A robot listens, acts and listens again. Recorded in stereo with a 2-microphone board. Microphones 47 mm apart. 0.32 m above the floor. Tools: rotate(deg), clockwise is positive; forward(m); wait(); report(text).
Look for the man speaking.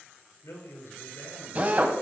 rotate(-75)
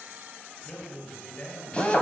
rotate(-25)
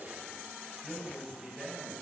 report("Facing the man speaking.")